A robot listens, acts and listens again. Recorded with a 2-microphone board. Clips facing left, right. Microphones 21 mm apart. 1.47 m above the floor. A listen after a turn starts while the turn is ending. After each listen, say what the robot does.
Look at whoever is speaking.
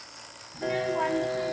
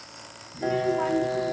Turn 65° left.
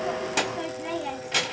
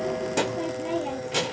Turn 15° left.
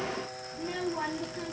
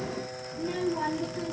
Facing the child speaking, 1 to 2 m away.